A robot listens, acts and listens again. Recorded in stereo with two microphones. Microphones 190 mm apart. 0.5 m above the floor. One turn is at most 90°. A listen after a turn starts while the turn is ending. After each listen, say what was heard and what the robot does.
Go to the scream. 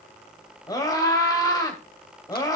The scream: about 20° left or 160° left. Turn 20° left.
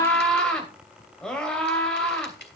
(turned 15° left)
Drive 1.0 m forward.
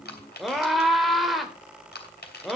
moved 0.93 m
Drive 1.0 m forward.
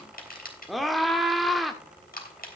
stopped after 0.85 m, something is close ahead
Arrived at the scream, straight ahead.